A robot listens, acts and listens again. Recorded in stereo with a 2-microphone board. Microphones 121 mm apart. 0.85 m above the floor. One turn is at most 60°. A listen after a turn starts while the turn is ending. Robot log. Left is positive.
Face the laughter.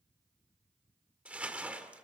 cmd idle
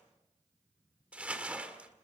cmd idle
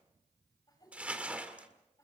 note: The laughter: about 25° left or 155° left.
cmd yaw +25
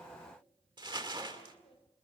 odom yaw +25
note: So it is at 130° left.
cmd yaw +60
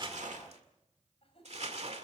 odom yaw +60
note: The laughter is now 50° left.
cmd yaw +50
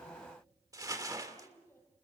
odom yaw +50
note: The laughter is now 20° left.
cmd yaw +20
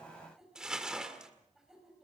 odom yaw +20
end: Found it: laughter, straight ahead.